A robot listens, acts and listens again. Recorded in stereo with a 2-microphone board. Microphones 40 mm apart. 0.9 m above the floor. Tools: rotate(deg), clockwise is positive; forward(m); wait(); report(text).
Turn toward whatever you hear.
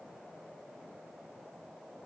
wait()
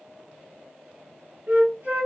rotate(45)
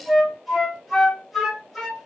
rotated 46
report("Facing the flute, 1 to 2 m away.")